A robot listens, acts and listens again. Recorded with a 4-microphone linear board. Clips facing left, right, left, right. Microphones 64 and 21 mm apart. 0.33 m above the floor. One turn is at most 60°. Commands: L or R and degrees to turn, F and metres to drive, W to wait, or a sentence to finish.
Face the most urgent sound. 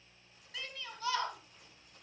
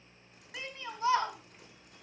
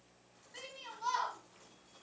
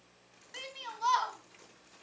R25
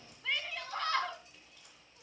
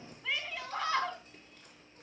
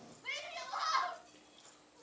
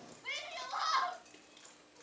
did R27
Facing the shout.